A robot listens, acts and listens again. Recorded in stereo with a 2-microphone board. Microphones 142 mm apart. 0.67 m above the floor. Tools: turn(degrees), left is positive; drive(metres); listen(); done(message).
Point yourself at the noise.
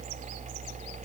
listen()
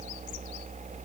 listen()
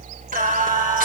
turn(degrees=-90)
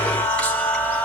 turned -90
turn(degrees=10)
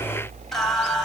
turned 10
done("Found it: singing, straight ahead.")